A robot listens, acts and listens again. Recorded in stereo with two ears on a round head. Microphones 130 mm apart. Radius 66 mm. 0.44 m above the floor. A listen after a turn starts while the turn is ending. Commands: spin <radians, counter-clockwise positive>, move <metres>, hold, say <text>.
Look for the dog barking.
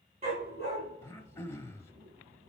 spin -0.79
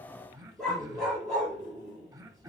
say Facing the dog barking.